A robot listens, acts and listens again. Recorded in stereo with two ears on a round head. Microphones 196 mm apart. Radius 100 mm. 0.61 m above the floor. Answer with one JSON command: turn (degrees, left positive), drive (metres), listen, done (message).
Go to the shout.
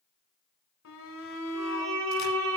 {"turn": 70}
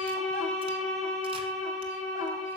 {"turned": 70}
{"listen": true}
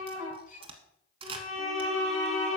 {"turn": 35}
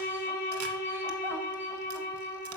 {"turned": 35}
{"listen": true}
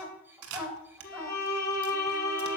{"turn": -10}
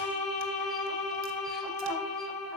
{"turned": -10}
{"drive": 1.0}
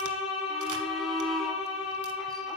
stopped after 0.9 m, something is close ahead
{"done": "Arrived at the shout, straight ahead."}